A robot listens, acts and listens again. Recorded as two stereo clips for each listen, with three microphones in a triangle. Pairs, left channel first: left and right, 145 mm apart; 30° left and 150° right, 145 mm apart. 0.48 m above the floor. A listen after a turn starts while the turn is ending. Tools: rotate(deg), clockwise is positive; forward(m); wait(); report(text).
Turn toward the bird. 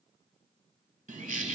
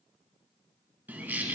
rotate(70)
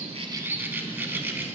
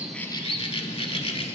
rotate(15)
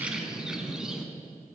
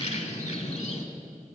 report("Found it: a bird, straight ahead.")